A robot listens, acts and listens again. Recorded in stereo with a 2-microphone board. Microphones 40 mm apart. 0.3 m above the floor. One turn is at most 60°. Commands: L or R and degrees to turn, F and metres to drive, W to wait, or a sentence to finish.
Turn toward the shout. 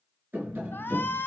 L60
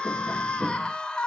L20
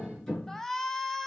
Found it: a shout, straight ahead.